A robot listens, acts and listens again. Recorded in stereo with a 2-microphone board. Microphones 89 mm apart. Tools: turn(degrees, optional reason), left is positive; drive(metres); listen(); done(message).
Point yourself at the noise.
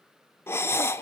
turn(degrees=25, reason="The breathing: about 25° left or 155° left.")
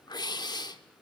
turn(degrees=130, reason="So it is at 130° left.")
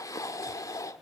turn(degrees=40, reason="The breathing is now 40° left.")
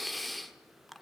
done("Found it: breathing, straight ahead.")